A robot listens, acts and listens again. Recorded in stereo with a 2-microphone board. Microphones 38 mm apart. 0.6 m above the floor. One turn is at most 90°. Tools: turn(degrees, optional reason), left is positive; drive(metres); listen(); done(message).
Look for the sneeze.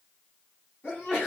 turn(degrees=60, reason="The sneeze: about 60° left or 120° left.")
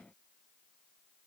listen()
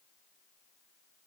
done("I heard a sneeze, but can't make it out now. It was about straight ahead or 60° left.")